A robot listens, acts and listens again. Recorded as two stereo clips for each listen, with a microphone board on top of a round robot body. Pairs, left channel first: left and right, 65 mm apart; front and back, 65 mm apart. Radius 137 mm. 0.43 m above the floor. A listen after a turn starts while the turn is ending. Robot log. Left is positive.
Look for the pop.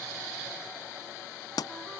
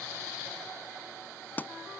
note: The pop: 65° left.
cmd yaw +65
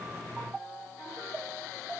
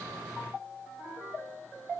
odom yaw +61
end: Facing where the pop came from. I can't hear it now.